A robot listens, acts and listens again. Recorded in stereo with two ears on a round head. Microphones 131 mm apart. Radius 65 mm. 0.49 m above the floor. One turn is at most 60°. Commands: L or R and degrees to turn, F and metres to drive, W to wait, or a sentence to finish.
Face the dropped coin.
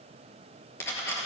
L20
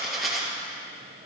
Found it: a dropped coin, straight ahead, 2 to 4 m away.